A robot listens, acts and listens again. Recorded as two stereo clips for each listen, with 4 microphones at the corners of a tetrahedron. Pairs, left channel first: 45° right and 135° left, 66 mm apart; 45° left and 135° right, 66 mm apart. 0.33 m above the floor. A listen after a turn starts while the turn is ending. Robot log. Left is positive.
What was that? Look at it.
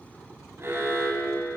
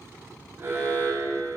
note: The alarm: straight behind.
cmd yaw +180
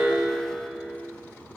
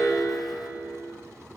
note: The alarm is now 40° left.
cmd yaw +40
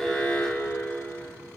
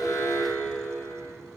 note: The alarm is now 10° left.
cmd yaw +10
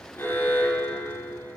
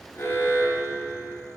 end: Found it: an alarm, straight ahead.